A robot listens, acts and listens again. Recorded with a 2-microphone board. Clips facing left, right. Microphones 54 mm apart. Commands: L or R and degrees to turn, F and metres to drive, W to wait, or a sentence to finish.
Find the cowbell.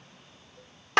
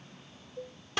R65
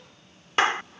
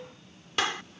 W
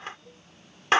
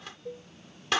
R55
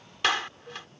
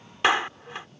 L10
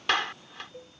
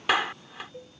Facing the cowbell.